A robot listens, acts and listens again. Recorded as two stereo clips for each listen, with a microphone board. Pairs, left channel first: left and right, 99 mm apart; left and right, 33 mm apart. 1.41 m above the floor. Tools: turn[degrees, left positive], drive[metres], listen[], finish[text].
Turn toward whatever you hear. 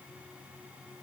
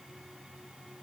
Action: listen[]
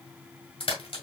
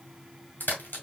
Thought: The crack: about 65° left or 115° left.
Action: turn[65]
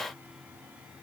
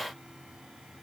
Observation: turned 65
Action: listen[]
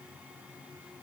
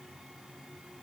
Action: finish[I heard a crack, but can't make it out now. It was about straight ahead or 50° left.]